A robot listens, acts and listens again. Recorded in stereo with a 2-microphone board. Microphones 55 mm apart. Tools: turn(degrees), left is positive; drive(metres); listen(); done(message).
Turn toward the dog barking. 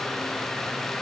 listen()
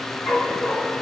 turn(degrees=60)
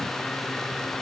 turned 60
listen()
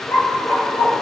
turn(degrees=55)
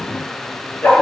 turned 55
turn(degrees=30)
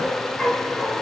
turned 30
done("Found it: a dog barking, straight ahead.")